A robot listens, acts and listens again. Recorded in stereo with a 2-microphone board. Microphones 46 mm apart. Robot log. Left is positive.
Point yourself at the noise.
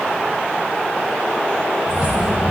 note: The keys jangling: about 20° right or 160° right.
cmd yaw -20
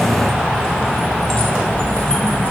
note: So it is at 30° left.
cmd yaw +30
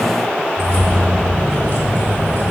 note: The keys jangling is now 35° left.
cmd yaw +35
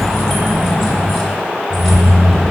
end: Facing the keys jangling, 2 to 4 m away.